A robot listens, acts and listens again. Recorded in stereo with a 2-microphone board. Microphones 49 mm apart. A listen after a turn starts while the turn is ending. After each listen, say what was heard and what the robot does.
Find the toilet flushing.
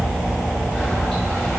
Keep listening.
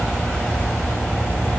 Keep listening.
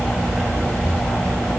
I can't make out a toilet flushing to turn to.